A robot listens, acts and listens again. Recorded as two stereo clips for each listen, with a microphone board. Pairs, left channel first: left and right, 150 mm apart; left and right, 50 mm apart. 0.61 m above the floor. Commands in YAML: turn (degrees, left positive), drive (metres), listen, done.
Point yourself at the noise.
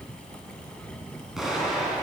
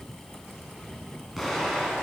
turn: -30
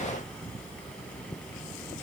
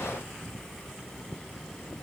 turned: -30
listen: true
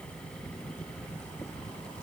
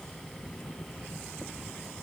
done: "I heard an explosion, but can't make it out now. It was about 25° left or 145° right."